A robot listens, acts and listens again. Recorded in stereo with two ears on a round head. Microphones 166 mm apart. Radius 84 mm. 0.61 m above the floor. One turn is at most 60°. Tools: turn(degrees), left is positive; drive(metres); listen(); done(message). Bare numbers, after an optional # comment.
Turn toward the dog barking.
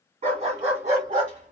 # The dog barking: about 45° right or 135° right.
turn(-45)
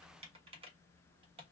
listen()
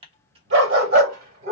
# The dog barking: about 45° right or 135° right.
turn(-45)
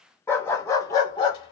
# So it is at 25° left.
turn(25)
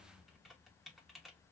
listen()
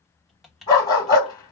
# The dog barking is now 20° left.
turn(20)
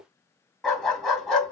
done("Found it: a dog barking, straight ahead, 1 to 2 m away.")